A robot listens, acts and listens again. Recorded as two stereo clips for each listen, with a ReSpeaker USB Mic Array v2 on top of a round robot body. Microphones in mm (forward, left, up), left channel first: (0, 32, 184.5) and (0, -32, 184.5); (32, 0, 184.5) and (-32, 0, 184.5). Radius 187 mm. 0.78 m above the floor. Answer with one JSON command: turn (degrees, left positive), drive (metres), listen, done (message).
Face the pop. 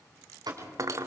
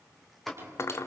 {"turn": -85}
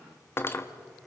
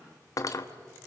{"done": "I heard a pop from this way, but can't make it out now."}